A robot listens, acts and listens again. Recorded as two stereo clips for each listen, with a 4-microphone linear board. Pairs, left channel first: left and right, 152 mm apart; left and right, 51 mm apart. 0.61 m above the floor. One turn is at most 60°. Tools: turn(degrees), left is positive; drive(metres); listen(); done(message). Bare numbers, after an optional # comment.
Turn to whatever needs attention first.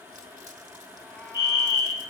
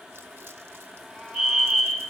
# The fire alarm: about 15° right or 165° right.
turn(-15)
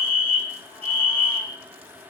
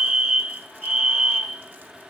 # So it is at 150° right.
turn(-60)
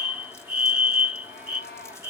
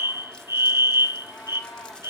# The fire alarm is now 90° right.
turn(-60)
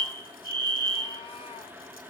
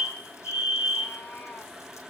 # The fire alarm is now 25° right.
turn(-25)
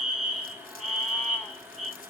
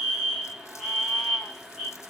done("Found it: a fire alarm, straight ahead.")